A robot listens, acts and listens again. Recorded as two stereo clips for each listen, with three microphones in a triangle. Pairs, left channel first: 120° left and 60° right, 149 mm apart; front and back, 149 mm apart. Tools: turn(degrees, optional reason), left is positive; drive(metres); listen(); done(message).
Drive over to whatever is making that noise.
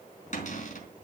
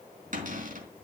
turn(degrees=150, reason="The cupboard door: 150° left.")
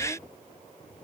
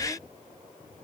listen()
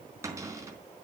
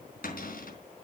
turn(degrees=10, reason="The cupboard door is now 10° left.")
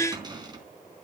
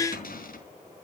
drive(metres=1.0)
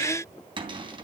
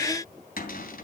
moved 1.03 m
drive(metres=1.0)
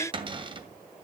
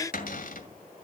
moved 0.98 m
drive(metres=1.0)
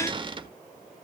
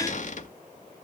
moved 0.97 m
turn(degrees=-10, reason="The cupboard door is now 10° right.")
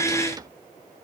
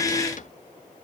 drive(metres=1.0)
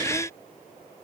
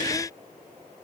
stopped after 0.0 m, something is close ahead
listen()
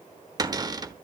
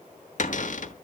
done("I am next to the cupboard door.")